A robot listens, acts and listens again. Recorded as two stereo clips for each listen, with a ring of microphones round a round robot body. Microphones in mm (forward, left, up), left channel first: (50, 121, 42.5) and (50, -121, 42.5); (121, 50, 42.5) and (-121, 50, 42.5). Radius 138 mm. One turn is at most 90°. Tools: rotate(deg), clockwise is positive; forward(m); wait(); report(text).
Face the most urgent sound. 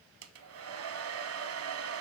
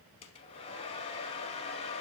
wait()
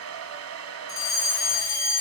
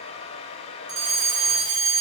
rotate(-90)
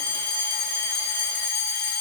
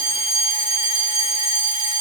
rotate(-90)
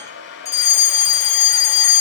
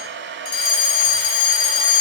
rotate(-15)
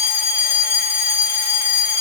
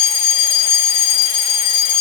report("Facing the fire alarm, 2 to 4 m away.")